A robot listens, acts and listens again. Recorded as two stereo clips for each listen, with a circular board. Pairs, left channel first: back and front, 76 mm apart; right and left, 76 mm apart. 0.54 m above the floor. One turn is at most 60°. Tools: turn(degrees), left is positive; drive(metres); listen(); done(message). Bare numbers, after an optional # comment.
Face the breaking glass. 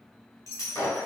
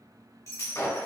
# The breaking glass: 135° right.
turn(-60)
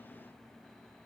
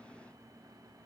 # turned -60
# Nothing new. It was at 75° right.
turn(-60)
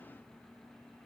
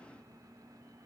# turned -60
# Nothing new. It was at 15° right.
turn(-15)
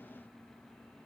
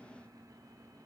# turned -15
done("Facing where the breaking glass came from. I can't hear it now.")